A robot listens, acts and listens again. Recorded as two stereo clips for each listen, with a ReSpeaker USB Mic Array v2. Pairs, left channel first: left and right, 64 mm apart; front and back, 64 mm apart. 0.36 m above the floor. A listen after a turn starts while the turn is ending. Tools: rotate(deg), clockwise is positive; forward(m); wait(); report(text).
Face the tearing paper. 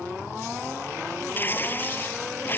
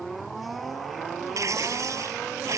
rotate(-145)
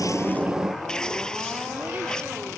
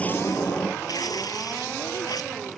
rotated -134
rotate(-10)
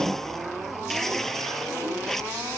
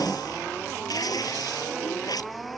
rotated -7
report("Facing the tearing paper.")